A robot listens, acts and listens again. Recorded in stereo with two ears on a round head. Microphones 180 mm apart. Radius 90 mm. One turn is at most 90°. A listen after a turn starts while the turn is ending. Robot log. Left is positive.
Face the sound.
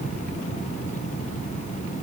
cmd idle
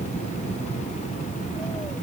cmd idle
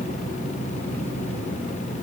end: I can't make out anything to turn to.